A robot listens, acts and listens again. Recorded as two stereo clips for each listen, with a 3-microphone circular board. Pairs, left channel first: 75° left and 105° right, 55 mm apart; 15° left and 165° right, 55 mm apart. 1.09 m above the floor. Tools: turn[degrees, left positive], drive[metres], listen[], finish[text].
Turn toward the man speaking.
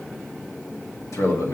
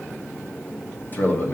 Thought: The man speaking: 65° left.
Action: turn[65]
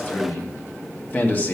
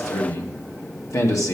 Thought: The man speaking is now 20° left.
Action: turn[20]
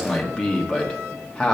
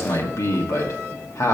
Action: finish[Found it: a man speaking, straight ahead.]